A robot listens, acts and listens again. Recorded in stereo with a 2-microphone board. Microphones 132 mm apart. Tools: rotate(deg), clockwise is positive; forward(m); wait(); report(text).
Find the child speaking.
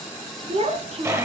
rotate(50)
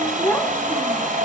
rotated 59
rotate(-15)
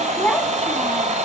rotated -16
rotate(-10)
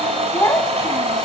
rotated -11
rotate(-20)
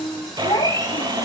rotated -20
rotate(-35)
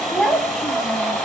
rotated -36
report("Found it: a child speaking, straight ahead.")